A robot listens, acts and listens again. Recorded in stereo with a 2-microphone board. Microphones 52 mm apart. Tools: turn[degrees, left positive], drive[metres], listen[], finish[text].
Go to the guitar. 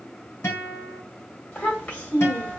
Thought: The guitar: about 60° left or 120° left.
Action: turn[60]
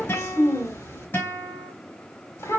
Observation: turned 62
Thought: So it is at 50° left.
Action: turn[50]
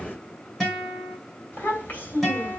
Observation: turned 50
Action: drive[1.0]
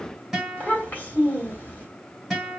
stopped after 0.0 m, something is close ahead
Action: finish[Blocked. The guitar is further on, straight ahead.]